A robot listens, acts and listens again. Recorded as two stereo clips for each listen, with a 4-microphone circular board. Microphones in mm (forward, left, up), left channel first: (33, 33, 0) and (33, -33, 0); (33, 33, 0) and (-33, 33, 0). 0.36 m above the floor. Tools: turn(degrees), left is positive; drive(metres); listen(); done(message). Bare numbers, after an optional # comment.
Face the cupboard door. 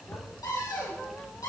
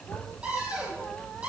# The cupboard door: 110° left.
turn(110)
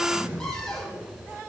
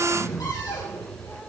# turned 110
listen()
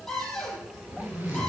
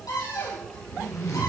# The cupboard door is now 10° left.
turn(10)
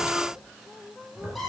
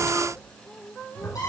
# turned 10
done("Found it: a cupboard door, straight ahead.")